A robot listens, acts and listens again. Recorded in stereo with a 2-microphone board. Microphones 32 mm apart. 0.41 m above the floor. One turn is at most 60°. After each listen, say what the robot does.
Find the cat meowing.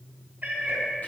Turn 60° right.
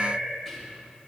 Turn 35° right.
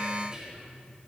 Keep listening.
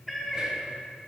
Found it: a cat meowing, straight ahead.